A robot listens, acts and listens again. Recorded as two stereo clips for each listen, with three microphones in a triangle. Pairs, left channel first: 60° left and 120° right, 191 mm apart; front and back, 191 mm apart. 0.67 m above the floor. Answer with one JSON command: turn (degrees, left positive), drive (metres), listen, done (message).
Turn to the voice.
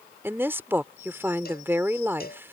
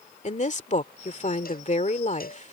{"turn": -45}
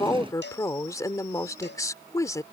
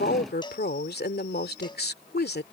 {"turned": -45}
{"turn": -10}
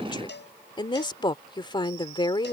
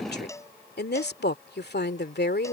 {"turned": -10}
{"done": "Found it: a woman speaking, straight ahead."}